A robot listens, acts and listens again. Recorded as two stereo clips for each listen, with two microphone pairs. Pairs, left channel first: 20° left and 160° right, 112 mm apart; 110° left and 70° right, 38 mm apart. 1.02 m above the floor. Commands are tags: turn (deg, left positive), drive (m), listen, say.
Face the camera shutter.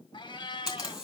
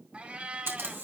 <turn deg="-75"/>
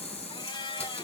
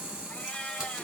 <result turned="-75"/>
<say>Found it: a camera shutter, straight ahead.</say>